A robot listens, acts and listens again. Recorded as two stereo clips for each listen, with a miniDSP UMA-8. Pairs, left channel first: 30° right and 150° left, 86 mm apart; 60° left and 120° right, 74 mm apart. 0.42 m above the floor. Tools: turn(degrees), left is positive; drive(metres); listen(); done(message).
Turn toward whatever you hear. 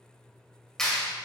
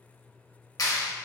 turn(degrees=55)
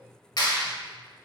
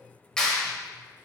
turn(degrees=-15)
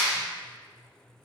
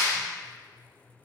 done("Facing the clap, 1 to 2 m away.")